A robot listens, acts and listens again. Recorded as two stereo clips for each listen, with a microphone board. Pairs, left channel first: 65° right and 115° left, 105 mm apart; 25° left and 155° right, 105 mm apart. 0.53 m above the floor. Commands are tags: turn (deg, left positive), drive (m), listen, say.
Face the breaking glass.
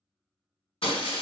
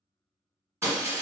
<turn deg="-95"/>
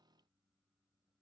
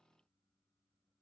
<say>I heard breaking glass from this way, but can't make it out now.</say>